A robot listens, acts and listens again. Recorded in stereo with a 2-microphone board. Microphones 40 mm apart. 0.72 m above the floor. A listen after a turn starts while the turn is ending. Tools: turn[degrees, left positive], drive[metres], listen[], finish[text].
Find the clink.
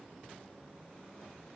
Action: listen[]
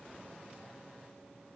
Action: listen[]
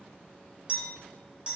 Thought: The clink: about 25° right or 155° right.
Action: turn[-25]
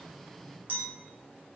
Thought: So it is at 130° right.
Action: turn[-130]
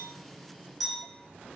Action: finish[Found it: a clink, straight ahead, 1 to 2 m away.]